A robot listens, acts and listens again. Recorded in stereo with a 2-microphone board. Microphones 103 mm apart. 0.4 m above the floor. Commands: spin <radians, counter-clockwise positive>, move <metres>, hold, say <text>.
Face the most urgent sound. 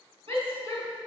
spin -1.05
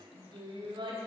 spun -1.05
spin -0.96
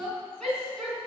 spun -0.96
say Found it: a shout, straight ahead.